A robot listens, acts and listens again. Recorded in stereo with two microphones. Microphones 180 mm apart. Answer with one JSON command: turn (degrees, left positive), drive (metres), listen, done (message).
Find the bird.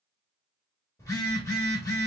{"listen": true}
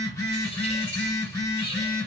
{"turn": 30}
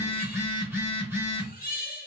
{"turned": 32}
{"turn": 110}
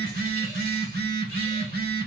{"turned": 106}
{"listen": true}
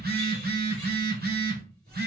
{"listen": true}
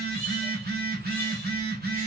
{"done": "Found it: a bird, straight ahead, 1 to 2 m away."}